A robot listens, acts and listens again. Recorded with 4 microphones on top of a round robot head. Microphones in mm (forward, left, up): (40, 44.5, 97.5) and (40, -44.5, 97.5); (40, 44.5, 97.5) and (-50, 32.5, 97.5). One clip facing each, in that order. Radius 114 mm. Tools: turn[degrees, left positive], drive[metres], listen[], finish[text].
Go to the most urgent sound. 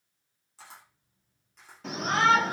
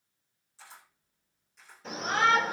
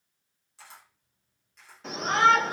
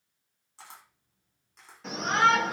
Thought: The shout: 95° left.
Action: turn[95]
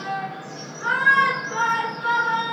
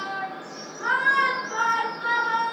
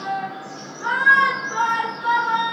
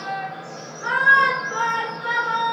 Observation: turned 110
Thought: The shout is now 10° right.
Action: turn[-10]
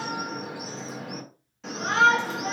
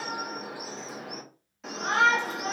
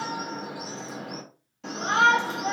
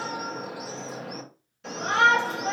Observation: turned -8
Action: drive[1.0]
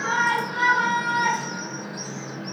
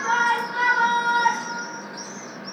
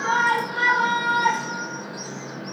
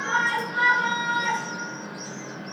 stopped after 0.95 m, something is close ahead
Action: finish[Arrived at the shout, straight ahead.]